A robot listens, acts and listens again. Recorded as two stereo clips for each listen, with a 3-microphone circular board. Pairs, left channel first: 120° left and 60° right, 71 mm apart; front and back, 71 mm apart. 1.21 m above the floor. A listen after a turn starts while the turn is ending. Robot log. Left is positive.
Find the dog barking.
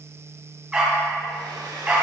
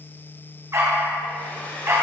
note: The dog barking: 130° right.
cmd yaw -130
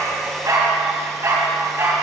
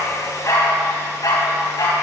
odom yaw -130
note: The dog barking is now 15° right.
cmd yaw -15
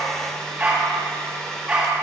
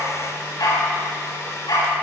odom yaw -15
note: The dog barking is now 10° left.
cmd yaw +10
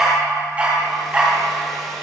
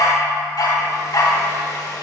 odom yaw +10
note: The dog barking is now 10° left.
cmd yaw +10
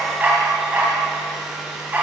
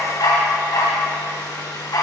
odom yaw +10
end: Found it: a dog barking, straight ahead.